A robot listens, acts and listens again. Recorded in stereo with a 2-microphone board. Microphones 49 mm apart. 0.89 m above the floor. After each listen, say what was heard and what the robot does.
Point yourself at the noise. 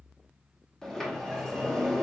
Turn 30° left.
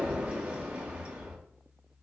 So it is at 25° right. Turn 25° right.
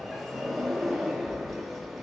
Found it: a sliding door, straight ahead.